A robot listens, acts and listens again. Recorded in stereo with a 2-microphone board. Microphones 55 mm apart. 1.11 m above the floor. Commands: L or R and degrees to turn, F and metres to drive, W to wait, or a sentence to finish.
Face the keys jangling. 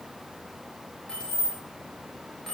L30
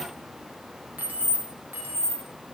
R45
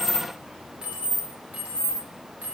R30
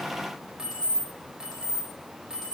R10
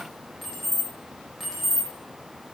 Found it: keys jangling, straight ahead.